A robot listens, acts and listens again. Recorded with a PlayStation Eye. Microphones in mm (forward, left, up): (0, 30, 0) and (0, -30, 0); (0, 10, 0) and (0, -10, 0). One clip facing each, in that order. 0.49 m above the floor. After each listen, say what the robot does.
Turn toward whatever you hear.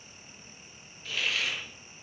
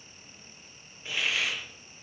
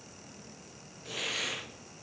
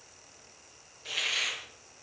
Turn 20° right.
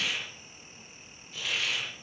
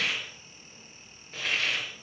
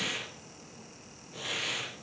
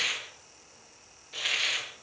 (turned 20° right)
Turn 135° right.
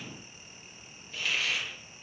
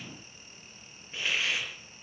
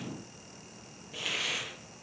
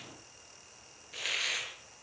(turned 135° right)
Turn 25° right.
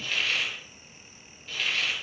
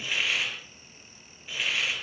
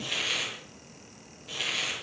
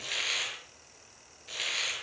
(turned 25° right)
Turn 15° right.
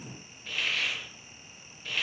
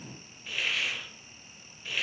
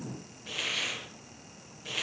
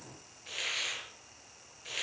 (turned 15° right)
Found it: a hiss, straight ahead.